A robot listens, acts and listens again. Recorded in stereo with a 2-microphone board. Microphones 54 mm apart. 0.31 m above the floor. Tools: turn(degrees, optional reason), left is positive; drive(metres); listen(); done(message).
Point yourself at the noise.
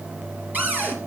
turn(degrees=-30, reason="The cupboard door: about 30° right or 150° right.")
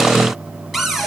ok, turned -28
done("Found it: a cupboard door, straight ahead, 2 to 4 m away.")